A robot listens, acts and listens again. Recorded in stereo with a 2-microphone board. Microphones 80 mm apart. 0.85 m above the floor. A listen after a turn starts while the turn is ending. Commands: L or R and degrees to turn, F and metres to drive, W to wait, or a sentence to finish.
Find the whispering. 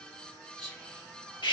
L30
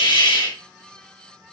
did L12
W
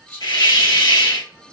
L170
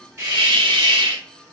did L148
L20
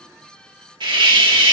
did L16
W
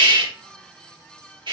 I heard whispering from this way, but can't make it out now.